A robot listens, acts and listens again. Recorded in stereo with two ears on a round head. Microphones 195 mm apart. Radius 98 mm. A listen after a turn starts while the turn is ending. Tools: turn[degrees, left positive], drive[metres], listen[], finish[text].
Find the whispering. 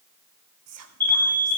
Action: turn[-90]
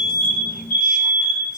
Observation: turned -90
Action: listen[]
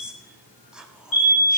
Action: finish[Facing the whispering, 1 to 2 m away.]